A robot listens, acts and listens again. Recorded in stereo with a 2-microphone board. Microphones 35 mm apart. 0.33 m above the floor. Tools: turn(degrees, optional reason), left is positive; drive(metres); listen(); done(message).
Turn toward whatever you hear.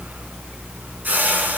turn(degrees=-65, reason="The whoosh: about 65° right or 115° right.")
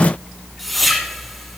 done("Found it: a whoosh, straight ahead, 1 to 2 m away.")